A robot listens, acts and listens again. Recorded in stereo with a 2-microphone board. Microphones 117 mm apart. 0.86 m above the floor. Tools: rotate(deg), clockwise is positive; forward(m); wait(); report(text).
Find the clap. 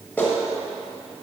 rotate(-30)
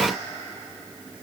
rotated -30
wait()
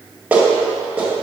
rotate(15)
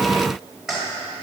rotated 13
report("Found it: a clap, straight ahead.")